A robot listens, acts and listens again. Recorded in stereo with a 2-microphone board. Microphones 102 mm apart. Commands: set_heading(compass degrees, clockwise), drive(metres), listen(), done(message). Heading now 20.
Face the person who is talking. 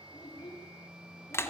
set_heading(335)
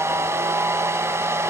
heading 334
listen()
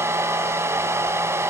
listen()
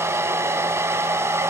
done("I heard a child speaking, but can't make it out now. It was about straight ahead or 90° left.")